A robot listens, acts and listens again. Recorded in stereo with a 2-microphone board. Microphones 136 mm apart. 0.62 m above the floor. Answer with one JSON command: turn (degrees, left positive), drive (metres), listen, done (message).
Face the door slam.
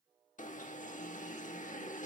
{"listen": true}
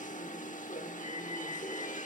{"listen": true}
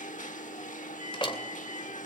{"turn": 40}
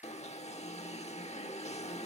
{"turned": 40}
{"listen": true}
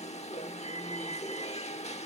{"done": "I heard a door slam, but can't make it out now. It was about straight ahead or 100° left."}